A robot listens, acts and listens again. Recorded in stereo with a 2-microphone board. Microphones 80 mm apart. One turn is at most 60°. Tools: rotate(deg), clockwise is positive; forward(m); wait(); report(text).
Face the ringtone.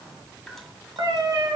wait()
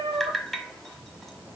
wait()
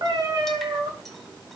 report("I can't make out a ringtone to turn to.")